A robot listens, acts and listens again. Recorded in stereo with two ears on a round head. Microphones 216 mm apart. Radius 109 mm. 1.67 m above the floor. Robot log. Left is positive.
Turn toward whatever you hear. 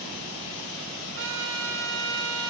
note: The trumpet: about 55° right or 125° right.
cmd yaw -55
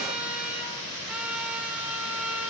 end: Facing the trumpet.